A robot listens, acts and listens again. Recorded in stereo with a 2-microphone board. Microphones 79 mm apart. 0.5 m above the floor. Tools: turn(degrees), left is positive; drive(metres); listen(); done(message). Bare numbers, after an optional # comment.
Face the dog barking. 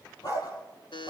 # The dog barking: about 50° left or 130° left.
turn(50)
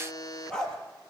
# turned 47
# So it is at 10° left.
turn(10)
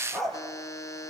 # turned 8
done("Found it: a dog barking, straight ahead.")